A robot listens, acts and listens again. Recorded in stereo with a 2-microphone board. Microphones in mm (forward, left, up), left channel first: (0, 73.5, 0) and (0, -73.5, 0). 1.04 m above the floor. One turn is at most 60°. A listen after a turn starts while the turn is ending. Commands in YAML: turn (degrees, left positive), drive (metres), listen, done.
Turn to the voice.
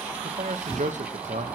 turn: -60
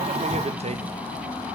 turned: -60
turn: -55
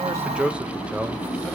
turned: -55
turn: -10
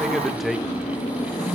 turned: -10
done: "Found it: a man speaking, straight ahead."